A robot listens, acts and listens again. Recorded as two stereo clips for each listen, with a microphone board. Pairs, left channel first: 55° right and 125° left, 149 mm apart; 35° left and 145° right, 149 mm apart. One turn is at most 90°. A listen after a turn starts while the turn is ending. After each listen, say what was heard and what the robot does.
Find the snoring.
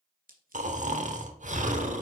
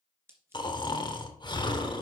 The snoring: 90° left. Turn 90° left.
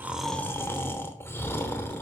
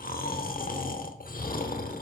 The snoring is now 20° left. Turn 20° left.
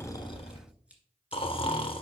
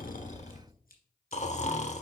Found it: snoring, straight ahead, 1 to 2 m away.